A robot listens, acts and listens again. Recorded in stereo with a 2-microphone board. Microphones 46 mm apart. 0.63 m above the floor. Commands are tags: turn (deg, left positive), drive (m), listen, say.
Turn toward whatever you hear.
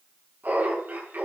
<turn deg="-50"/>
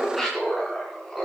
<say>Found it: laughter, straight ahead, over 4 m away.</say>